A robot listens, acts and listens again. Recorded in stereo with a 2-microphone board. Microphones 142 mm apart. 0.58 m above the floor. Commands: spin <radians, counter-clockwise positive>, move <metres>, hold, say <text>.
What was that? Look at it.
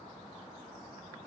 hold
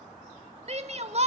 spin -0.87
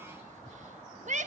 spin -1.31
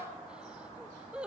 spin -0.17
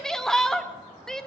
say Facing the shout, 1 to 2 m away.